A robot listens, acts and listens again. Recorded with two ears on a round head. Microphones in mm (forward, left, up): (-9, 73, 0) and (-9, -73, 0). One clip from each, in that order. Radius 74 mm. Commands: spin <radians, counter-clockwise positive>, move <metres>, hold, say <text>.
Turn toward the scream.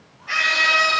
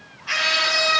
spin -1.05
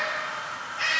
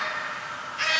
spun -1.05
spin -0.96
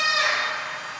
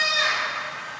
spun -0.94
say Found it: a scream, straight ahead.